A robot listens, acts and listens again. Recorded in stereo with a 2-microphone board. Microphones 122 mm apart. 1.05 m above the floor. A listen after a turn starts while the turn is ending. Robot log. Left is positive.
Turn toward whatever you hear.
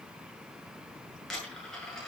cmd yaw +30
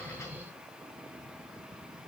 cmd idle
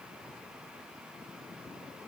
end: I heard a dropped coin, but can't make it out now. It was about 25° right or 145° left.